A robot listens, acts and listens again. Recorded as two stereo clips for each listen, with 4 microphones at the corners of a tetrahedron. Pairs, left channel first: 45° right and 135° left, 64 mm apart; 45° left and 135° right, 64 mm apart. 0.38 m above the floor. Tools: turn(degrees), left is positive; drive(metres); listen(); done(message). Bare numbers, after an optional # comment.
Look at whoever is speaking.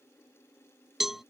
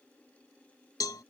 listen()
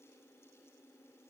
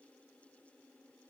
listen()
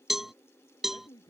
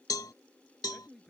# The man speaking: 45° right.
turn(-45)
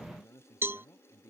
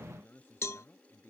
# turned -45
# The man speaking is now 10° right.
turn(-10)
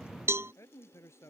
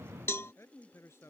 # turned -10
done("Facing the man speaking.")